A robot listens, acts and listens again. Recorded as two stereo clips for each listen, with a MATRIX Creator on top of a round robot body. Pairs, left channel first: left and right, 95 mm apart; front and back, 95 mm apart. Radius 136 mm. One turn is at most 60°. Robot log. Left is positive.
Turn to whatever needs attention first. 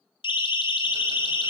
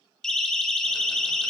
note: The siren: 80° left.
cmd yaw +60
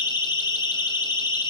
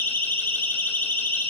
note: The siren is now 65° left.
cmd yaw +60
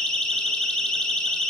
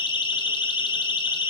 end: Facing the siren, 2 to 4 m away.